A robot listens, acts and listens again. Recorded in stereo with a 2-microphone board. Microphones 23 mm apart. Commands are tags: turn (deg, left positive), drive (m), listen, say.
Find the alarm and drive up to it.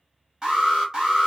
<turn deg="-30"/>
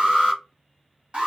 <turn deg="-110"/>
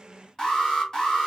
<turn deg="25"/>
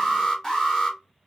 <turn deg="15"/>
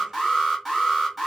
<drive m="1.0"/>
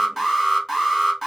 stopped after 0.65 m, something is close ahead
<say>Arrived at the alarm, straight ahead.</say>